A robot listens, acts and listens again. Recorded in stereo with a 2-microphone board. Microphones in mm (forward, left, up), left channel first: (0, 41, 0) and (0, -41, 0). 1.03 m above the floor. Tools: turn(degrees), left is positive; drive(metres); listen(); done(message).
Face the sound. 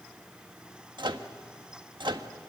turn(degrees=-70)
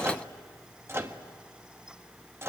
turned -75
turn(degrees=-30)
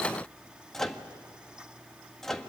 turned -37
done("Found it: a microwave, straight ahead, 1 to 2 m away.")